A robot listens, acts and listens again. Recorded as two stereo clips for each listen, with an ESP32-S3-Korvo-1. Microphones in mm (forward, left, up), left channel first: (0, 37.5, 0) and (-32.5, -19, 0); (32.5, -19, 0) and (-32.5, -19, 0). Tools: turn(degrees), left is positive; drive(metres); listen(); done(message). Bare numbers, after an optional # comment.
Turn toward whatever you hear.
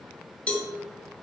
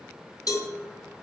done("Facing the cowbell, 2 to 4 m away.")